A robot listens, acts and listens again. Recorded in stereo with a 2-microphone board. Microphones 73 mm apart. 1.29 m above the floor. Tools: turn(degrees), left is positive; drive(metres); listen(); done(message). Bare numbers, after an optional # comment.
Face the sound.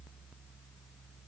listen()
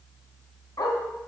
# The dog barking: about 60° left or 120° left.
turn(60)
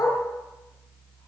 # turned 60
# So it is at 45° left.
turn(45)
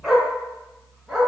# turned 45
done("Facing the dog barking.")